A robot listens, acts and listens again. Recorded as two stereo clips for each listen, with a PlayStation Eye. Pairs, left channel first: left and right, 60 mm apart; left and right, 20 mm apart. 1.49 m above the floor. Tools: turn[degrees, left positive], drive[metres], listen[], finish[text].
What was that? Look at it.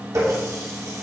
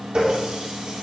Thought: The running tap: about 60° right or 120° right.
Action: turn[-60]
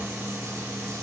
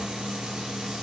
Action: listen[]
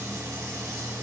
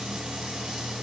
Action: listen[]
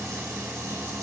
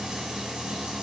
Action: finish[I heard a running tap, but can't make it out now. It was about straight ahead or 60° right.]